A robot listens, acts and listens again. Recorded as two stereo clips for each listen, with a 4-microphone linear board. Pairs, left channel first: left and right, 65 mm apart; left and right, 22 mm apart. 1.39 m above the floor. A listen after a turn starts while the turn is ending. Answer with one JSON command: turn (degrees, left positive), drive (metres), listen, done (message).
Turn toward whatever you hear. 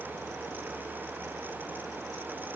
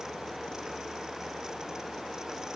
{"listen": true}
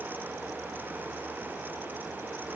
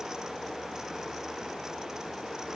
{"listen": true}
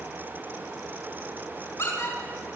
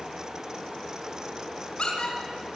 {"turn": 55}
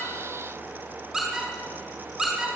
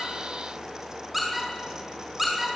{"done": "Found it: a squeak, straight ahead."}